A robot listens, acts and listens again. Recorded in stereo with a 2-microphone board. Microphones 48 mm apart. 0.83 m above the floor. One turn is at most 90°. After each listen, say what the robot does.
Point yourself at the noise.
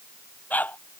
Turn 35° left.
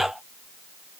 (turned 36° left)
Found it: a dog barking, straight ahead.